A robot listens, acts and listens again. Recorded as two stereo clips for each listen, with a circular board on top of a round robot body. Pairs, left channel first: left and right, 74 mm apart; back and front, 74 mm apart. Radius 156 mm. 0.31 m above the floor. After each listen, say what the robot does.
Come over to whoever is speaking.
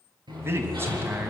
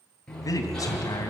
Turn 145° right.
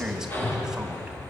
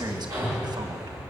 Turn 10° right.
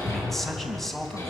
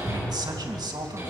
Drive 1.0 m forward.
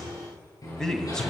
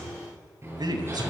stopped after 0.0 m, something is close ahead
Blocked. The man speaking is further on, straight ahead.